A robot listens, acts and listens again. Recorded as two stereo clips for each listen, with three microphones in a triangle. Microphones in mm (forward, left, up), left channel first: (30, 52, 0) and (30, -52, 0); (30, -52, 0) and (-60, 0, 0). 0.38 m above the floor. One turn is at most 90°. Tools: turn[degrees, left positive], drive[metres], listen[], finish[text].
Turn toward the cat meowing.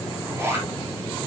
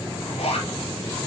Action: listen[]
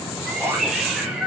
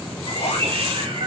Thought: The cat meowing: straight behind.
Action: turn[90]
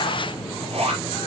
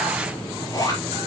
Thought: Nothing new. It was at 90° left.
Action: turn[90]
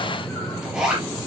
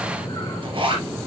Action: listen[]
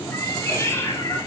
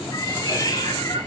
Thought: The cat meowing is now 25° left.
Action: turn[25]
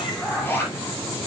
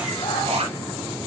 Action: finish[Found it: a cat meowing, straight ahead.]